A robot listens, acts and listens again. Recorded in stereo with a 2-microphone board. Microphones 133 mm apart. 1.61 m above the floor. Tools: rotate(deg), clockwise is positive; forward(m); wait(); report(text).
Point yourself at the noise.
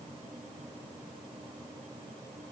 wait()
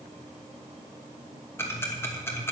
rotate(-20)
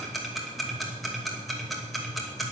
report("Facing the ticking.")